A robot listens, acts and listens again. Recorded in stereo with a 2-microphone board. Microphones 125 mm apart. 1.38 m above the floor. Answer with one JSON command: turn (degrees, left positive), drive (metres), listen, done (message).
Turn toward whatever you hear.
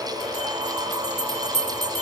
{"turn": -60}
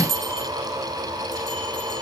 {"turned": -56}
{"turn": -50}
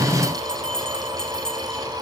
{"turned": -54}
{"done": "Found it: a bell, straight ahead."}